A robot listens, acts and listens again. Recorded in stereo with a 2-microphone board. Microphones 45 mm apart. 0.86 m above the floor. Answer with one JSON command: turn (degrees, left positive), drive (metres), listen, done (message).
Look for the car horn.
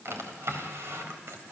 {"listen": true}
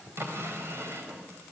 {"listen": true}
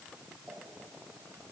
{"done": "I can't make out a car horn, only a drawer."}